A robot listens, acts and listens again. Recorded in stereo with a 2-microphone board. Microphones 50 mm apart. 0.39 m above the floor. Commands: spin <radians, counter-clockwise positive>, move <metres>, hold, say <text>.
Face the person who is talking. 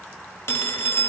hold
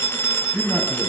spin -0.52
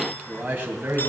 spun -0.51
spin -2.36
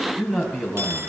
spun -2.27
say Found it: a man speaking, straight ahead, 2 to 4 m away.